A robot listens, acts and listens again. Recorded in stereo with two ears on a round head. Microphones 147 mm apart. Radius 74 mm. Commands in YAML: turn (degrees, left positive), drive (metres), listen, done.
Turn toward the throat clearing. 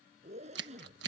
listen: true
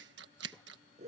listen: true
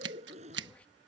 done: "I can't make out throat clearing to turn to."